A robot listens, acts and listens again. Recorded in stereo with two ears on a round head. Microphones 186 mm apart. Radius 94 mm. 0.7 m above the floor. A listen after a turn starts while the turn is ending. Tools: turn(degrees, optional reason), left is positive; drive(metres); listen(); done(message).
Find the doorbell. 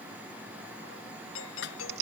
turn(degrees=65, reason="The doorbell: about 65° left or 115° left.")
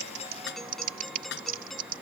done("Found it: a doorbell, straight ahead.")